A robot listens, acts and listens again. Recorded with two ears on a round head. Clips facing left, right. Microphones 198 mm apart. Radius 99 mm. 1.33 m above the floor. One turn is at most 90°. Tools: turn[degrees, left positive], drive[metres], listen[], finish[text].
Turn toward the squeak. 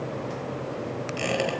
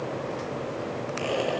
Action: turn[90]
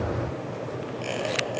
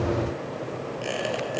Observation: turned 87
Thought: So it is at 10° right.
Action: turn[-10]
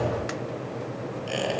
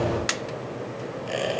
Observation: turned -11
Action: finish[Found it: a squeak, straight ahead, over 4 m away.]